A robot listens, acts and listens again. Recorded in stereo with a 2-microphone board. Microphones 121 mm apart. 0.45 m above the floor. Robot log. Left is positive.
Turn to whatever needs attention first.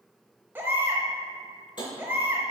note: The baby crying: about 20° right or 160° right.
cmd yaw -20
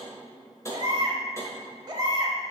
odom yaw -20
note: So it is at 140° right.
cmd yaw -140
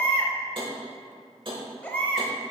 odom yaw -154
note: The baby crying is now 15° left.
cmd yaw +15
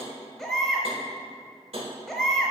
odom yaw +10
end: Found it: a baby crying, straight ahead.